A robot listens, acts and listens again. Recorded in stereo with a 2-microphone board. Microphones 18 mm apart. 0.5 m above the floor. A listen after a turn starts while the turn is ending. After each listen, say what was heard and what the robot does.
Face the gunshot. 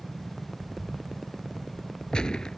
The gunshot: about 50° left or 130° left. Turn 50° left.
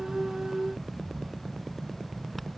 Keep listening.
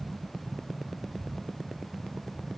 I heard a gunshot, but can't make it out now. It was about straight ahead or 80° left.